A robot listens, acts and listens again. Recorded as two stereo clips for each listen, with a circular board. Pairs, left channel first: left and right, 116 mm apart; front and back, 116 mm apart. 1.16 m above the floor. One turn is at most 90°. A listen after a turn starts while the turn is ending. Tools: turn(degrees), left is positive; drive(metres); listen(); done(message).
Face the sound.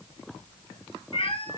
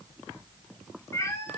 turn(degrees=65)
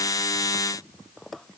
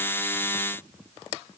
listen()
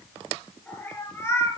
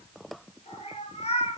turn(degrees=25)
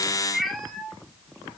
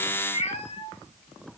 done("Found it: a cat meowing, straight ahead, 2 to 4 m away.")